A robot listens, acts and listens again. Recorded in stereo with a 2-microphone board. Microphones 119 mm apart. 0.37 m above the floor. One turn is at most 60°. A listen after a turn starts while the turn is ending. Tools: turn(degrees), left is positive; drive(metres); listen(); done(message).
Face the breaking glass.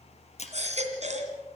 turn(degrees=60)
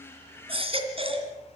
listen()
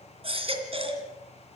done("I heard breaking glass, but can't make it out now. It was about 5° left or 55° left.")